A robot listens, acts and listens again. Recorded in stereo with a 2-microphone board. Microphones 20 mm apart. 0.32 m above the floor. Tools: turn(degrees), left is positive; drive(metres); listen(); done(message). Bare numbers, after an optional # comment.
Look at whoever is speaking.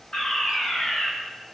listen()
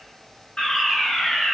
listen()
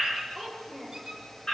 turn(30)
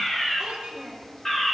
# So it is at 15° right.
turn(-15)
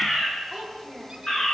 done("Facing the child speaking, over 4 m away.")